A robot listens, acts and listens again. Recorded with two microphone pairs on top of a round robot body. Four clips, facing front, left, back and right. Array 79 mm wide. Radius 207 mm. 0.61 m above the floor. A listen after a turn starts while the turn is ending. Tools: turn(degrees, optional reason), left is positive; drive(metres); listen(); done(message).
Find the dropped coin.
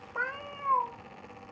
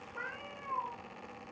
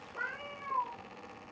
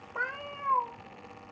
listen()
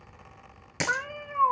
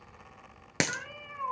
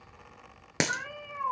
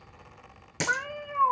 turn(degrees=150, reason="The dropped coin: 150° left.")
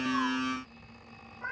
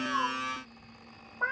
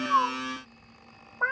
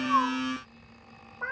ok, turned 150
done("I heard a dropped coin from this way, but can't make it out now.")